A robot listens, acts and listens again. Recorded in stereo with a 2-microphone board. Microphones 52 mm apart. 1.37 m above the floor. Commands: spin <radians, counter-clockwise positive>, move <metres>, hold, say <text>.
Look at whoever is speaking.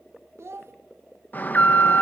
spin -1.05
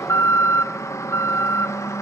hold
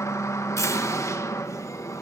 hold
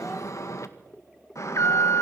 say I heard a child speaking, but can't make it out now. It was about straight ahead or 60° right.